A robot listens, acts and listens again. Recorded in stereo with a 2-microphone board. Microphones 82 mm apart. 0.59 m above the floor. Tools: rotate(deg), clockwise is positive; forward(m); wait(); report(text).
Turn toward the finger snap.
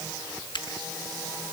rotate(-90)
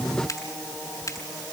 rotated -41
rotate(-45)
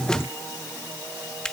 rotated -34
rotate(-10)
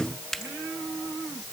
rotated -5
report("Facing the finger snap.")